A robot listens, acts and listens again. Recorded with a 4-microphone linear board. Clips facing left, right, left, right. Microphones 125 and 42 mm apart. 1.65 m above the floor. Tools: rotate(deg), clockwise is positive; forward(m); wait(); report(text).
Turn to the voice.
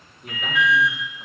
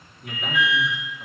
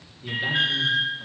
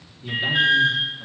rotate(-30)
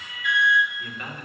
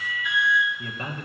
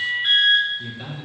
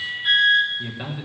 rotate(30)
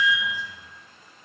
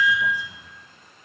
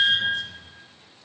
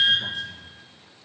wait()
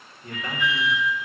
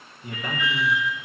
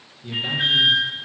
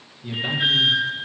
rotate(10)
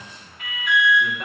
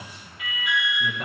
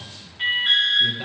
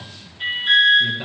report("Found it: a man speaking, straight ahead.")